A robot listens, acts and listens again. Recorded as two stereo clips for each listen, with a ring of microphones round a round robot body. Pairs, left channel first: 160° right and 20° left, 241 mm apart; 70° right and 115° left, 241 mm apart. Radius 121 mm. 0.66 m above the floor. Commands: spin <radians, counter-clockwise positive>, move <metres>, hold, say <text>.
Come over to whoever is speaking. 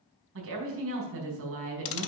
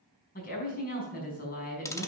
spin -0.26
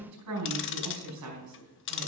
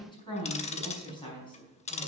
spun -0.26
move 1.0
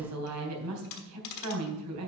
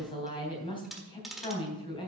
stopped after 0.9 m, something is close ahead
say Something is in my way. I am facing the woman speaking but have not reached it.